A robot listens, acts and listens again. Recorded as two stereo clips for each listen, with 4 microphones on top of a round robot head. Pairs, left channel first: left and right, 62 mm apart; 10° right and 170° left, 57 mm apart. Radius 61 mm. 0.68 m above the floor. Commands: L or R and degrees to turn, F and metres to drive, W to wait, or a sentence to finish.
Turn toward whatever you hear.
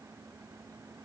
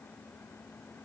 W
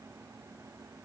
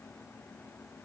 W
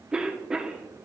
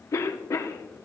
R15
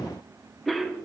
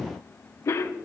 Found it: a cough, straight ahead.